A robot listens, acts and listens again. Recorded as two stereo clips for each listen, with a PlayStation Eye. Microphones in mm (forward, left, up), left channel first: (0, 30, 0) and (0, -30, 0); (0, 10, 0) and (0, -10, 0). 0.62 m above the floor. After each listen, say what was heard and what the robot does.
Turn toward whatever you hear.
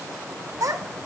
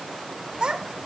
The child speaking: about 55° right or 125° right. Turn 55° right.
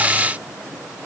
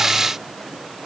Keep listening.
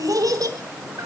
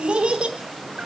So it is at 80° right. Turn 80° right.
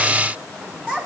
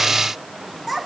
The child speaking is now 15° right. Turn 15° right.
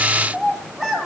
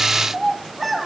Found it: a child speaking, straight ahead.